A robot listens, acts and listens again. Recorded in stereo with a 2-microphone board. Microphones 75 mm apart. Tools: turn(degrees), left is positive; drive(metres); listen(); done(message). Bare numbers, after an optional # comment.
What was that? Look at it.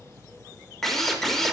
turn(30)
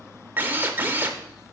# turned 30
# So it is at 25° right.
turn(-25)
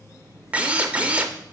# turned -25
# The drill is now 20° right.
turn(-20)
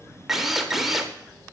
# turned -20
done("Facing the drill, under 1 m away.")